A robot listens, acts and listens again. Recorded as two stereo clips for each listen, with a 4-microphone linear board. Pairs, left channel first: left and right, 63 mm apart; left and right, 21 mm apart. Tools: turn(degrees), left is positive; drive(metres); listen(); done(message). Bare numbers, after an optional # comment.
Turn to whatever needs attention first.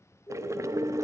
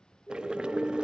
turn(90)
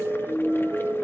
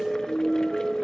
done("Found it: a siren, straight ahead.")